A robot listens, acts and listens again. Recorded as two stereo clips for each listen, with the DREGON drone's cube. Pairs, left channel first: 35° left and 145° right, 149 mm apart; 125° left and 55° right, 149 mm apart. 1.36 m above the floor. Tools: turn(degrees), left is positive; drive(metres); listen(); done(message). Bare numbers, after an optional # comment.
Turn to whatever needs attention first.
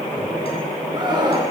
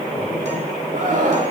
# The scream: 85° right.
turn(-85)
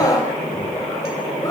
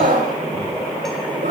# The scream is now 35° right.
turn(-35)
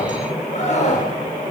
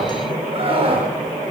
done("Found it: a scream, straight ahead, over 4 m away.")